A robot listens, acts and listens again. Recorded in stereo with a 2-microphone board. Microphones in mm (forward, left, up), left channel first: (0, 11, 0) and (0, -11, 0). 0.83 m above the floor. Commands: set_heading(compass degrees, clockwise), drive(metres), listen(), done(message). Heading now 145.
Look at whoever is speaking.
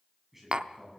set_heading(175)
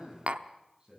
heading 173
set_heading(318)
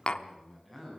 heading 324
set_heading(314)
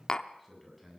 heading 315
done("Facing the man speaking.")